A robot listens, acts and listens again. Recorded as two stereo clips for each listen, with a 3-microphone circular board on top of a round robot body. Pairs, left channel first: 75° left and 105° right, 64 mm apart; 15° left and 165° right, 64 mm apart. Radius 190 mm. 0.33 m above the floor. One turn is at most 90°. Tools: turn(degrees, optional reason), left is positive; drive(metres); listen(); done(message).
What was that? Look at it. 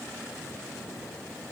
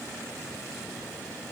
listen()
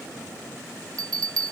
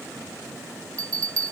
turn(degrees=-90, reason="The bell: 130° right.")
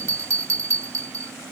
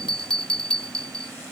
turn(degrees=-65, reason="The bell is now 65° right.")
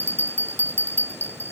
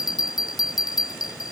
turn(degrees=20, reason="The bell is now 20° left.")
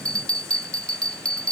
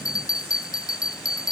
done("Found it: a bell, straight ahead.")